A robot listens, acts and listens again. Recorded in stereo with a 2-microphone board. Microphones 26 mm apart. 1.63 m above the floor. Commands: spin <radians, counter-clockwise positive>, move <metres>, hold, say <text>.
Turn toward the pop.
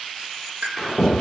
spin -1.57
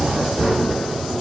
say Facing where the pop came from. I can't hear it now.